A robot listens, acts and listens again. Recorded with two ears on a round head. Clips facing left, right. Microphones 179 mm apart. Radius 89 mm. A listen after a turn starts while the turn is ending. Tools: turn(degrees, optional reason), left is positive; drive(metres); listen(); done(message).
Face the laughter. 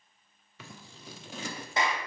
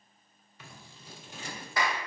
listen()
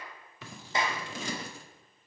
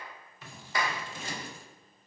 listen()
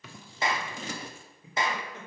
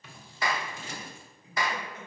turn(degrees=70, reason="The laughter: about 70° left or 110° left.")
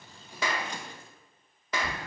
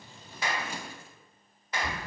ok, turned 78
done("Facing the laughter.")